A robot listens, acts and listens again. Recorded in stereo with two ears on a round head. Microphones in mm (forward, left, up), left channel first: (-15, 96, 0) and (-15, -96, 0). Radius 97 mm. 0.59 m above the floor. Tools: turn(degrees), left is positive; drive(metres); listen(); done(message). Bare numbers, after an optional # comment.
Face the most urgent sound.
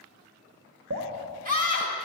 # The scream: about 40° right or 140° right.
turn(-40)
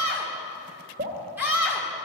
# So it is at 10° right.
turn(-10)
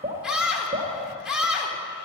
done("Found it: a scream, straight ahead.")